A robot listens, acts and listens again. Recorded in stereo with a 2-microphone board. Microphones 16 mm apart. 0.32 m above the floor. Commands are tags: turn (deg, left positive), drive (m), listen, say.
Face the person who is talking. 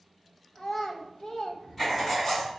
<turn deg="50"/>
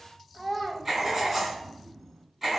<turn deg="15"/>
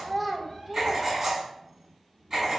<say>Found it: a child speaking, straight ahead.</say>